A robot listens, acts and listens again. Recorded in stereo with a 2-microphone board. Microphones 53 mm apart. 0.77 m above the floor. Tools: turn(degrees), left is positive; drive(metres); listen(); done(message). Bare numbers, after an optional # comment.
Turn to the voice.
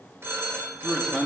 turn(30)
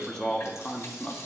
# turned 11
# So it is at 170° left.
turn(170)
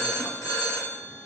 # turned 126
# Nothing new. It was at 45° left.
turn(45)
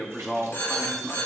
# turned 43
done("Found it: a man speaking, straight ahead.")